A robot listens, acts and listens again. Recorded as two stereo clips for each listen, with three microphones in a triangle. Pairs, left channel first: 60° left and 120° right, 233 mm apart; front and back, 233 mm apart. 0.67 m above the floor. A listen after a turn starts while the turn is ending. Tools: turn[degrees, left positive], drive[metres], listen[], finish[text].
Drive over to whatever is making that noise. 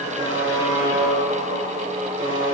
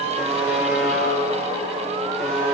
Thought: The buzzer: 90° right.
Action: turn[-90]
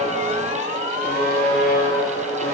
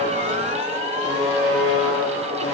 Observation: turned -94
Action: drive[1.0]
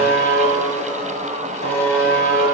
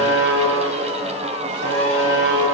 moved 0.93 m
Thought: The buzzer is now 10° left.
Action: turn[10]
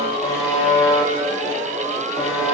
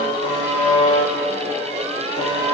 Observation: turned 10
Action: drive[1.0]
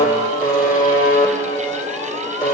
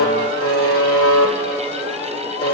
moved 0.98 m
Action: drive[1.0]
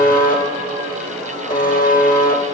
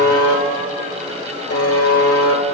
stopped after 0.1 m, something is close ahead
Action: finish[Arrived at the buzzer, straight ahead.]